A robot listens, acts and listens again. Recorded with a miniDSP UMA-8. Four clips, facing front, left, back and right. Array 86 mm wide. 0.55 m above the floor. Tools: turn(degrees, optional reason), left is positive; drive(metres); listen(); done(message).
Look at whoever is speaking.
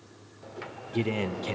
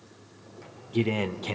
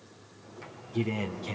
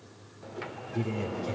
turn(degrees=60, reason="The man speaking: 60° left.")
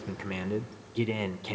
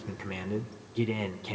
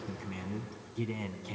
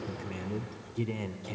turn(degrees=25, reason="The man speaking is now 25° left.")
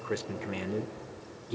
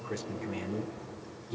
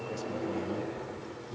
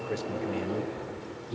turn(degrees=-10, reason="The man speaking is now 10° right.")
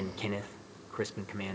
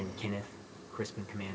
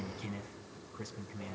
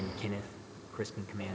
done("Facing the man speaking.")